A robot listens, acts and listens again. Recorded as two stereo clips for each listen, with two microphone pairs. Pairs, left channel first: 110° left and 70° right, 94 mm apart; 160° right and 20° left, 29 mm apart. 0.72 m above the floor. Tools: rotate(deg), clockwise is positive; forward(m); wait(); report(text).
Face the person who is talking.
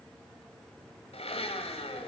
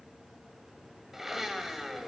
wait()
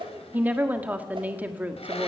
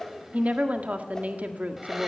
report("Facing the woman speaking.")